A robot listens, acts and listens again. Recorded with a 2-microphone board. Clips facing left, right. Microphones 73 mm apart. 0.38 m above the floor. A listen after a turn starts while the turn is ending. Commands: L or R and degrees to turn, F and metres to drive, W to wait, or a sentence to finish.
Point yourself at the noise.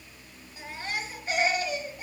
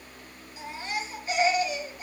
L35
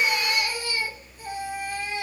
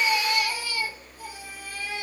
L105
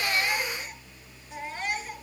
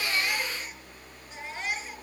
Found it: a baby crying, straight ahead, over 4 m away.